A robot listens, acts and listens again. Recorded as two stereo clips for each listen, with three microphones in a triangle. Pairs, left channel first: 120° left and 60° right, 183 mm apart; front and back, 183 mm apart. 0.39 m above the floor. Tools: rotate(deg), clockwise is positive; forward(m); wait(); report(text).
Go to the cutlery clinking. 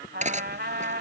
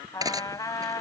rotate(110)
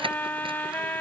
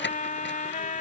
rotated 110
wait()
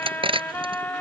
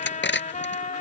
forward(1.0)
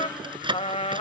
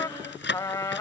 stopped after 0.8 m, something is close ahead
report("Something is in my way. I am facing the cutlery clinking but have not reached it.")